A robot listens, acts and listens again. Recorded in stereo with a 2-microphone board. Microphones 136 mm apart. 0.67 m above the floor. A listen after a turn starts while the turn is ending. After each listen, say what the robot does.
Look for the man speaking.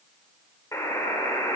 Keep listening.
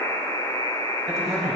Turn 30° right.
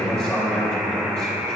Turn 20° left.
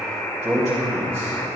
Turn 10° right.
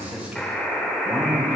Found it: a man speaking, straight ahead.